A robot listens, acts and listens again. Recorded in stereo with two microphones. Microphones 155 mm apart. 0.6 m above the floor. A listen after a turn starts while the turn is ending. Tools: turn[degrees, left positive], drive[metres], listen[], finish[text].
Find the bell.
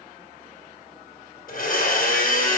Action: listen[]
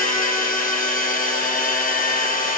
Action: listen[]
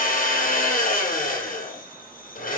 Action: finish[I can't make out a bell to turn to.]